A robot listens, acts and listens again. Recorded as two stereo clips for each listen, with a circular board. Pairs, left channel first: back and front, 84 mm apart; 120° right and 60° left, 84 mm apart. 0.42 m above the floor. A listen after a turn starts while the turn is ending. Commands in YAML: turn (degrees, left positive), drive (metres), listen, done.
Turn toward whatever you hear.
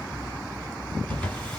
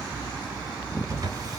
turn: 105
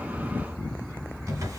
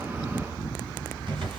turn: 50
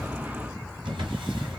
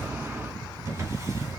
turn: 10
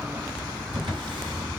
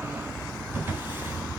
done: "Found it: a drawer, straight ahead."